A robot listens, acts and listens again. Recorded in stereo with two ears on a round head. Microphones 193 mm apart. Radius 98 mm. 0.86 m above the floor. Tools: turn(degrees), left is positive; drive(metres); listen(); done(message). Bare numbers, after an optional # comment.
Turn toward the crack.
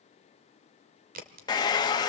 # The crack: about 45° right or 135° right.
turn(-45)
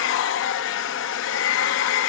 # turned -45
listen()
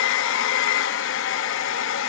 done("I heard a crack, but can't make it out now. It was about straight ahead or 90° right.")